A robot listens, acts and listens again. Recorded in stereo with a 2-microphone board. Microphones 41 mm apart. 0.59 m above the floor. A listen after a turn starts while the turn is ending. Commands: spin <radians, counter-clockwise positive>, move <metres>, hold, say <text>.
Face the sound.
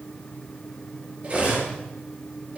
spin -0.52
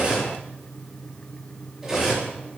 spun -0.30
spin -0.17
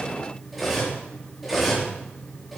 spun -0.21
say Facing the cutlery clinking.